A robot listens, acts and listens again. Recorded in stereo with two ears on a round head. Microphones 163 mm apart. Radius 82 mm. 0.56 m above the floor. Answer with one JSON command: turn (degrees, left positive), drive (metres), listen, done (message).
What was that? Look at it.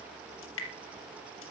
{"turn": 90}
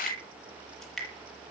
{"done": "Facing the dripping."}